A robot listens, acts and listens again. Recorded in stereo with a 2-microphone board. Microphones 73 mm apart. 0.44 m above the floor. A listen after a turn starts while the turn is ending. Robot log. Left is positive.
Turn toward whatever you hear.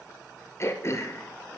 note: The throat clearing: about 40° left or 140° left.
cmd yaw +40
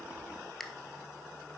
end: Found it: throat clearing, straight ahead.